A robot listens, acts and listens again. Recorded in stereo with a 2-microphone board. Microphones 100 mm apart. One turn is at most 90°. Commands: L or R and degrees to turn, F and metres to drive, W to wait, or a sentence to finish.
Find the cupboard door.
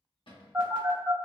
L55
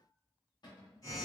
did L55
L50
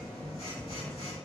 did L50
W
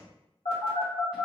W
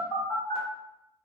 Facing where the cupboard door came from. I can't hear it now.